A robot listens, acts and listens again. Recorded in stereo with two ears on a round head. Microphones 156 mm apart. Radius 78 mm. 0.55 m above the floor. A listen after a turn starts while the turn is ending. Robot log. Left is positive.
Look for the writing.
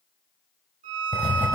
cmd yaw -30
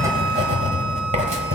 note: So it is at 135° right.
cmd yaw -135
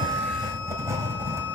note: The writing is now 15° right.
cmd yaw -15
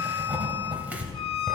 note: The writing is now 10° right.
cmd yaw -10
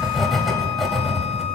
end: Found it: writing, straight ahead, 1 to 2 m away.